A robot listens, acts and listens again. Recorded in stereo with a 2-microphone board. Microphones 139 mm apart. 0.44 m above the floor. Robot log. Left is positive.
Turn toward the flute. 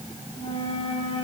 note: The flute: about 45° left or 135° left.
cmd yaw +45
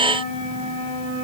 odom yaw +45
note: So it is at 90° left.
cmd yaw +90
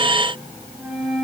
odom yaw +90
end: Found it: a flute, straight ahead.